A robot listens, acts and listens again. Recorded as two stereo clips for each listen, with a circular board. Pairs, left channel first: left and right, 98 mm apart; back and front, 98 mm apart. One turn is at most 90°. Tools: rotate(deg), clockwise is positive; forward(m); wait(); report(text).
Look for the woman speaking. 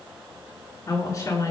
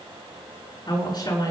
rotate(-90)
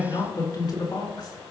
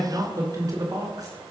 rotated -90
rotate(-50)
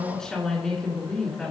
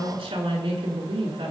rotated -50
report("Facing the woman speaking.")